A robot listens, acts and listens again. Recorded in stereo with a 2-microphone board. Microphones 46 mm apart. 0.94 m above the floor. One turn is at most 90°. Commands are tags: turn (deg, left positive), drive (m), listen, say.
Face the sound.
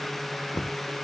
<turn deg="90"/>
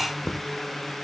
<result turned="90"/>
<turn deg="10"/>
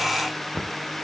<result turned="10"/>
<say>Found it: knocking, straight ahead.</say>